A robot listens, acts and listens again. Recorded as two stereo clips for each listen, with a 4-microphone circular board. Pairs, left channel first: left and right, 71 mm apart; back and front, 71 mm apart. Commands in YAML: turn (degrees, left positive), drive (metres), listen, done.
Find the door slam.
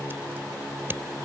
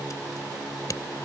listen: true
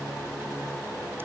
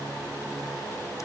listen: true
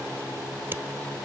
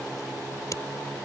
done: "I can't make out a door slam."